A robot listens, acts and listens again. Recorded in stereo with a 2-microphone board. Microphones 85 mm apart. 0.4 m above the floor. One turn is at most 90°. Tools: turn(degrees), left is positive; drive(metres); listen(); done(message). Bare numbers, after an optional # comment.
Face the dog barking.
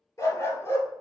# The dog barking: about 30° left or 150° left.
turn(30)
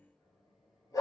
# So it is at 135° left.
turn(90)
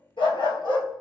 # The dog barking is now 85° left.
turn(85)
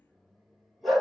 done("Facing the dog barking.")